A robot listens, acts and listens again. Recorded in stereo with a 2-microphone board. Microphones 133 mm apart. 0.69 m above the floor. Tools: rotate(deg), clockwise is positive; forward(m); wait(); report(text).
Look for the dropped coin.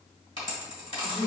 rotate(-40)
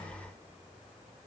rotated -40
wait()
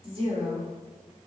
report("I heard a dropped coin, but can't make it out now. It was about straight ahead or 100° left.")